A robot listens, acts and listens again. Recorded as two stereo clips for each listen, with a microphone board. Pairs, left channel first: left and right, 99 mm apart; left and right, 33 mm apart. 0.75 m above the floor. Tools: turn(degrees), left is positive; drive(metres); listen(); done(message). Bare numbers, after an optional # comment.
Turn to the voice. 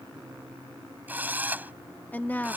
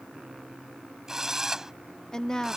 # The woman speaking: about 20° left or 160° left.
turn(20)
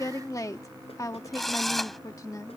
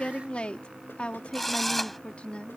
# So it is at 140° left.
turn(140)
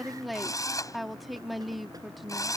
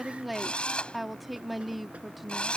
done("Facing the woman speaking.")